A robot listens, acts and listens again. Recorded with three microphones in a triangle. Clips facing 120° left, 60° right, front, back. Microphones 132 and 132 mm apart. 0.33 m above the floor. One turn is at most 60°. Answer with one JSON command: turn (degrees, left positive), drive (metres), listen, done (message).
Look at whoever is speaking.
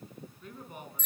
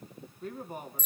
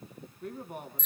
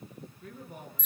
{"turn": -10}
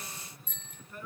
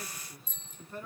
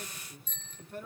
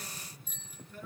{"done": "Facing the man speaking, 2 to 4 m away."}